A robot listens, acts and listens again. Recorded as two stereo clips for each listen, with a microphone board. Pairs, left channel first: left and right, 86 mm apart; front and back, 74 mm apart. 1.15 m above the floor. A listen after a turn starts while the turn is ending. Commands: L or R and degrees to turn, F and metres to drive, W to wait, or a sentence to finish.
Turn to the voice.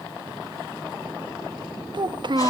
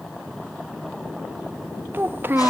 R120
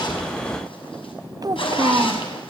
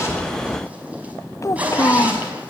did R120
R50
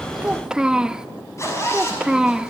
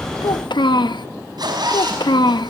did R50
R10
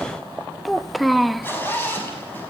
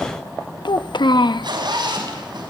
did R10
Found it: a child speaking, straight ahead.